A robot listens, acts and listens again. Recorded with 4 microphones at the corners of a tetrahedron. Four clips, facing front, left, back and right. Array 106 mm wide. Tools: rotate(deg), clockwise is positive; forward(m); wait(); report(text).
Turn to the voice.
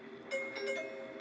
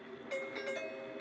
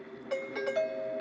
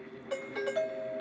wait()
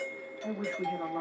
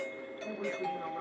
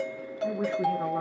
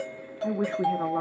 rotate(90)
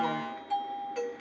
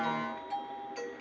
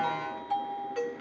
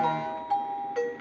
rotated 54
rotate(35)
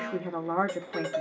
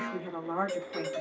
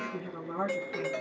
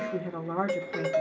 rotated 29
report("Facing the woman speaking.")